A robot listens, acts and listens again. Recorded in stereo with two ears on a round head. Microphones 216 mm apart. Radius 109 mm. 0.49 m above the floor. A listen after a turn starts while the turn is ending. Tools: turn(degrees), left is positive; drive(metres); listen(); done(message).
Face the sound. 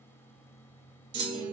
turn(degrees=-20)
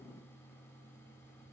listen()
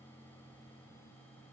done("I heard a clunk, but can't make it out now. It was about straight ahead or 140° right.")